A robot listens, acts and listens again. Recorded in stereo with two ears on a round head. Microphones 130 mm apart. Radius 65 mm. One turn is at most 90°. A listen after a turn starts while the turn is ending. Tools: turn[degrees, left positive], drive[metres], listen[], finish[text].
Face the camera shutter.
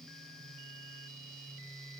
Action: listen[]
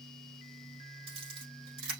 Thought: The camera shutter: about 40° right or 140° right.
Action: turn[-40]
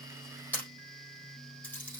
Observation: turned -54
Thought: So it is at 10° left.
Action: turn[10]
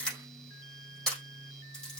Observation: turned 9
Action: finish[Facing the camera shutter, over 4 m away.]